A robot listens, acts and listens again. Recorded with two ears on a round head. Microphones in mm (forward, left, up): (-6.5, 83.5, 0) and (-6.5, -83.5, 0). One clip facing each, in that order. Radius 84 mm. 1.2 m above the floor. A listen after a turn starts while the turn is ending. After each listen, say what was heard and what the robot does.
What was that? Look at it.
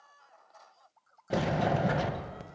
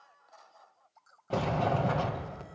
The sliding door: about 15° left or 165° left. Turn 15° left.
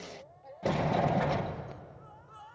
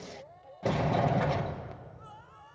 Facing the sliding door, under 1 m away.